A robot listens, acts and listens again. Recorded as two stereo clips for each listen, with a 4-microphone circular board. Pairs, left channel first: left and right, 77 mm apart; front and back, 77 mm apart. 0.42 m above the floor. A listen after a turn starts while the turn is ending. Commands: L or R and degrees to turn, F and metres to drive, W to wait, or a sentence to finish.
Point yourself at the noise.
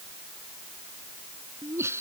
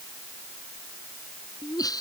R35
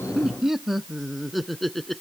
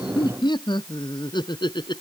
Found it: laughter, straight ahead.